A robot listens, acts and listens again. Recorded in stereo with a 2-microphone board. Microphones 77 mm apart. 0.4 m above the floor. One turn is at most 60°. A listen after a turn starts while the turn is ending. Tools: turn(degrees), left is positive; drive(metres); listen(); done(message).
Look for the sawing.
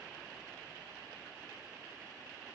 listen()
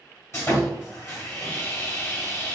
turn(degrees=35)
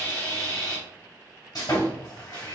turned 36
turn(degrees=60)
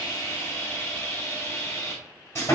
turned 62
turn(degrees=40)
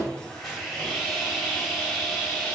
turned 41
done("Facing the sawing.")